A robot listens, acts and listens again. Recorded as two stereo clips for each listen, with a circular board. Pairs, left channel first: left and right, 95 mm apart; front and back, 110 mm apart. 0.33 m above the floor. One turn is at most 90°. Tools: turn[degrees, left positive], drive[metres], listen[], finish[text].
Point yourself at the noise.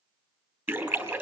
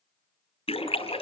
Thought: The splash: 25° right.
Action: turn[-25]
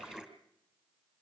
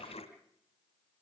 Action: finish[Facing the splash.]